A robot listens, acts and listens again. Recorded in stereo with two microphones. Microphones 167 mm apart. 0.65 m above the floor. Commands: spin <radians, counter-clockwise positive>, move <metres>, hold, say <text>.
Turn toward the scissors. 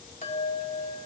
hold
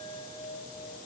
hold
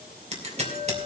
spin -0.79
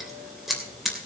say Found it: scissors, straight ahead.